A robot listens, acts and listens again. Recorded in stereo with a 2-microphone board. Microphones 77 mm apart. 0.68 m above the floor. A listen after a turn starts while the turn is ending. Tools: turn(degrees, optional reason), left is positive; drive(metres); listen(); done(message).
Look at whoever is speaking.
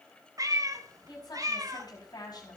turn(degrees=65, reason="The woman speaking: about 65° left or 115° left.")
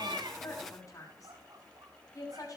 turn(degrees=50, reason="So it is at 50° left.")
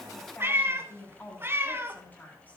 turn(degrees=20, reason="The woman speaking is now 20° left.")
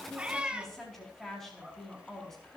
done("Found it: a woman speaking, straight ahead, over 4 m away.")